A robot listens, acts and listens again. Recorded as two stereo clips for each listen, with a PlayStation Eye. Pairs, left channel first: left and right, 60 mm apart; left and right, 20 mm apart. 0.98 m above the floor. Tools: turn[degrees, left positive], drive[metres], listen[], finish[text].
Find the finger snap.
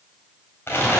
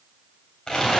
Action: listen[]
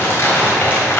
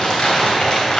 Action: listen[]
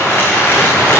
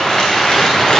Action: finish[I can't make out a finger snap to turn to.]